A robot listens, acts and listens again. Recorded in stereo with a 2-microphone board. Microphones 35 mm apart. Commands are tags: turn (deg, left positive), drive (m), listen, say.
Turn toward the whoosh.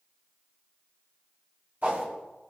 <turn deg="-70"/>
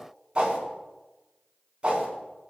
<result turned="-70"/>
<turn deg="-30"/>
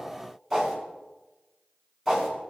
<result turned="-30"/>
<say>Facing the whoosh, 2 to 4 m away.</say>